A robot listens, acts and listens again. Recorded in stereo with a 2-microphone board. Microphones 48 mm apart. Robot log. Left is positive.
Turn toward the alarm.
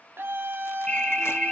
cmd yaw +30
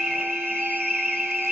note: So it is at 15° right.
cmd yaw -15
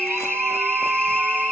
end: Found it: an alarm, straight ahead.